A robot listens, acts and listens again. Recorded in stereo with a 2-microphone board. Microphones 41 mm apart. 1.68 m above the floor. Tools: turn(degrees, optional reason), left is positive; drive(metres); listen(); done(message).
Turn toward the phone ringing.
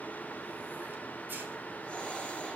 listen()
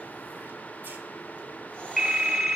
turn(degrees=-30)
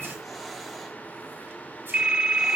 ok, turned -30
turn(degrees=-145, reason="So it is at 145° right.")
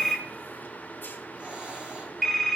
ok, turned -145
done("Found it: a phone ringing, straight ahead.")